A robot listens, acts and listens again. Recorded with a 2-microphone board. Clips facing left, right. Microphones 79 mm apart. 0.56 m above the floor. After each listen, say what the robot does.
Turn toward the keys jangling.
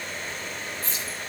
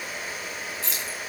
Turn 90° right.
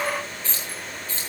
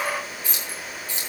Turn 15° right.
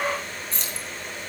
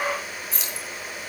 Found it: keys jangling, straight ahead, 2 to 4 m away.